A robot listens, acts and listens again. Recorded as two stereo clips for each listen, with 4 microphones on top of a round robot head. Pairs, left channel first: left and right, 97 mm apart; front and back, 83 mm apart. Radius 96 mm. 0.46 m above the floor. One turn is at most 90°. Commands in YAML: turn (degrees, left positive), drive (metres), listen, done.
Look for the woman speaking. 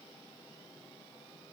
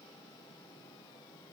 listen: true
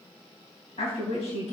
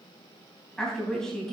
turn: 80
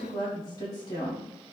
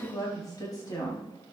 turn: 40
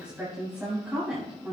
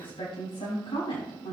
turn: -10
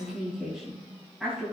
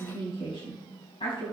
done: "Found it: a woman speaking, straight ahead."